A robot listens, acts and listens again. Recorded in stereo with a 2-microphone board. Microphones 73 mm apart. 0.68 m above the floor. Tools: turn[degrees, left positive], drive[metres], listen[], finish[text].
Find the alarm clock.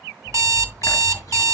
Thought: The alarm clock: about 45° right or 135° right.
Action: turn[-45]
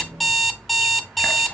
Action: finish[Facing the alarm clock, under 1 m away.]